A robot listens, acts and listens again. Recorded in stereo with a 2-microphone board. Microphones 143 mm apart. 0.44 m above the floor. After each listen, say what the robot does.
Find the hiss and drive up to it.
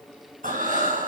Keep listening.
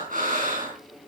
Keep listening.
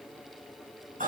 I can't make out a hiss to turn to.